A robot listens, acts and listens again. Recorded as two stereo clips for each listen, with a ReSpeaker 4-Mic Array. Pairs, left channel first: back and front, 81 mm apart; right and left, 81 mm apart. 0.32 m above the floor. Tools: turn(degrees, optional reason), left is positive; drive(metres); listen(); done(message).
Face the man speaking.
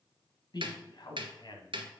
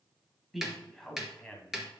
turn(degrees=-165, reason="The man speaking: 165° right.")
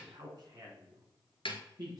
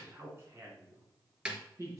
turn(degrees=35, reason="The man speaking is now 35° left.")
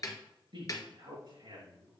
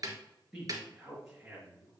done("Facing the man speaking, 2 to 4 m away.")